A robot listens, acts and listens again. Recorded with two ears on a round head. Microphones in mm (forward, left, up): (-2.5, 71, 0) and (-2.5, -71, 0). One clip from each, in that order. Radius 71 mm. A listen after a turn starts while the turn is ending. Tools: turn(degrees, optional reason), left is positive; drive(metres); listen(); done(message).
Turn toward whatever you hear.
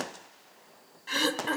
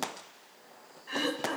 turn(degrees=70, reason="The throat clearing: about 70° left or 110° left.")
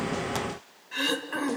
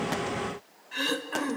done("Found it: throat clearing, straight ahead, 1 to 2 m away.")